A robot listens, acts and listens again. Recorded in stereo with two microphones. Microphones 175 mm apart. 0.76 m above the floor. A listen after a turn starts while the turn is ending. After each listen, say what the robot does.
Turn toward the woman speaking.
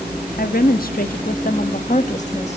Turn 45° left.
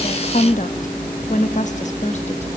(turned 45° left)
Turn 40° left.
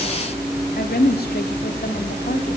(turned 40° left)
Turn 120° left.
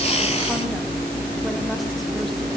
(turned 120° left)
Keep listening.
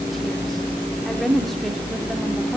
Facing the woman speaking, 2 to 4 m away.